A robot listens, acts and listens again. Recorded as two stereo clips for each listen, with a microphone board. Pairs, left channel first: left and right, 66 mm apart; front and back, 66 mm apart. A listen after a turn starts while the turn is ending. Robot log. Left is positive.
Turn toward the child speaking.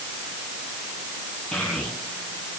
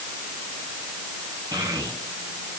note: The child speaking: 170° left.
cmd yaw +170
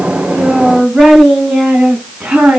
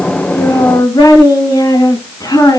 note: The child speaking is now 10° right.
cmd yaw -10
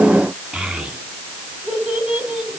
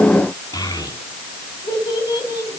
note: The child speaking is now 10° right.
cmd yaw -10
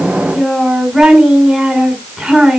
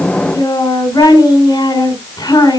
end: Facing the child speaking.